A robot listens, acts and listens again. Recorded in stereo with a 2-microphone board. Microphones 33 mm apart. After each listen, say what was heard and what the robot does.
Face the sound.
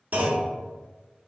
The clunk: about 55° right or 125° right. Turn 55° right.
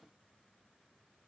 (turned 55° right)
Keep listening.
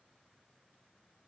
I heard a clunk, but can't make it out now. It was about straight ahead or 70° right.